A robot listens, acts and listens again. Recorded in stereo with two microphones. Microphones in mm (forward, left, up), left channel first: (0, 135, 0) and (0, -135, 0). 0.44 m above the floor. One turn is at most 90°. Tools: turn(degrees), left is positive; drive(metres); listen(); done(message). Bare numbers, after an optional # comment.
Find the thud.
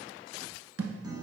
# The thud: about 65° right or 115° right.
turn(-65)
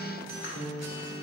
listen()
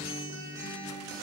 done("I heard a thud, but can't make it out now. It was about straight ahead or 50° right.")